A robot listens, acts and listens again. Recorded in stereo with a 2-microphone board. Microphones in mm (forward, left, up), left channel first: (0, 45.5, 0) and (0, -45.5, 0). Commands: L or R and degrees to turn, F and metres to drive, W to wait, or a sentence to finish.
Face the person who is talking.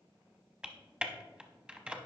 W
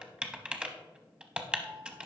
W
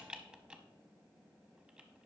I can't make out anyone speaking, only typing on a keyboard.